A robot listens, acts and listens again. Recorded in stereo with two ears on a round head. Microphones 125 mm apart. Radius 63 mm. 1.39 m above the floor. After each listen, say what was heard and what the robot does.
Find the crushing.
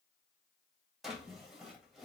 Keep listening.
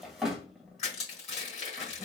The crushing: about 45° left or 135° left. Turn 45° left.
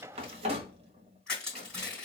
Facing the crushing, 2 to 4 m away.